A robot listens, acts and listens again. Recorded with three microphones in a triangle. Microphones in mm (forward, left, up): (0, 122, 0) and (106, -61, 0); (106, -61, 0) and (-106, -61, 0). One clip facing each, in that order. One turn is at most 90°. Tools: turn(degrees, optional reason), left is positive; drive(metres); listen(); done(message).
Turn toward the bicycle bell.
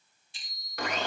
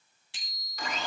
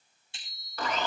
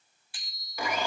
turn(degrees=-65, reason="The bicycle bell: 65° right.")
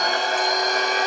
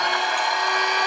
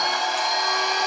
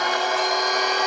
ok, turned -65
listen()
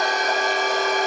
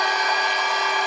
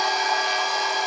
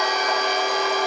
listen()
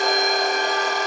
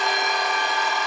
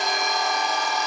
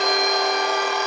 done("Facing where the bicycle bell came from. I can't hear it now.")